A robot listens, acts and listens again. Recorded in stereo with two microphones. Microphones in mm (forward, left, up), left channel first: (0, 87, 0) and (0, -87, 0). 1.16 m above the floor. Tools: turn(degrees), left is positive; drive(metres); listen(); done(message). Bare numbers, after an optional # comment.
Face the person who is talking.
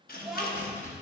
turn(30)
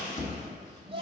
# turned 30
# So it is at 30° right.
turn(-30)
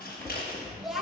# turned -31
done("Facing the child speaking.")